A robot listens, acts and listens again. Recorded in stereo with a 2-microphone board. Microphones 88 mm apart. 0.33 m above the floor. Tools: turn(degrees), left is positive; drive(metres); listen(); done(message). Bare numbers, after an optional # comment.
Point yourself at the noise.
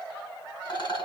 # The rattle: about 60° left or 120° left.
turn(60)
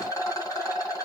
# So it is at 45° left.
turn(45)
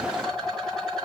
done("Facing the rattle.")